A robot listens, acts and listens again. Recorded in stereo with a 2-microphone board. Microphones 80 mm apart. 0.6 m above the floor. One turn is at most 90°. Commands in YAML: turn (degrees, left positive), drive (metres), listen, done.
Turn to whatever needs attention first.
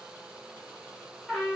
listen: true
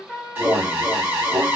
turn: -25
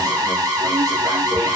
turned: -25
turn: -90
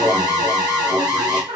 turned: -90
turn: -65
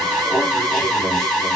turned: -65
done: "Found it: an alarm, straight ahead."